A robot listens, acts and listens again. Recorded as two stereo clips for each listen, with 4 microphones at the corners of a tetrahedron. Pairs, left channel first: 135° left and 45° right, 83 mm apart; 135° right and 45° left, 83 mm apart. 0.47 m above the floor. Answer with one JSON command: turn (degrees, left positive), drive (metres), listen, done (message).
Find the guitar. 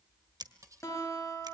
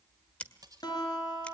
{"turn": -170}
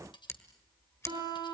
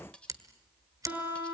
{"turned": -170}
{"turn": -25}
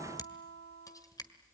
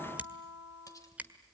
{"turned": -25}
{"done": "Found it: a guitar, straight ahead, over 4 m away."}